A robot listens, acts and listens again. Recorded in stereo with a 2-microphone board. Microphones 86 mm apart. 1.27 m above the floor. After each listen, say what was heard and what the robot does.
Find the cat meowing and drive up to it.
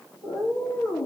The cat meowing: about 55° left or 125° left. Turn 55° left.
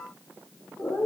So it is at 65° left. Turn 65° left.
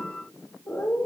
The cat meowing is now 15° left. Turn 15° left.
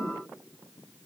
Drive 1.0 m forward.
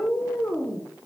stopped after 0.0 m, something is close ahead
Blocked. The cat meowing is further on, straight ahead.